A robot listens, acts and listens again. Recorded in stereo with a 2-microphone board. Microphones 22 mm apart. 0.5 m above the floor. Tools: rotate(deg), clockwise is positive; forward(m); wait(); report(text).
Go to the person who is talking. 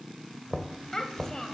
rotate(-30)
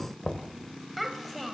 forward(1.0)
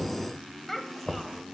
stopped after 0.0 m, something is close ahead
rotate(-10)
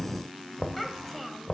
report("Something is in my way. I am facing the child speaking but have not reached it.")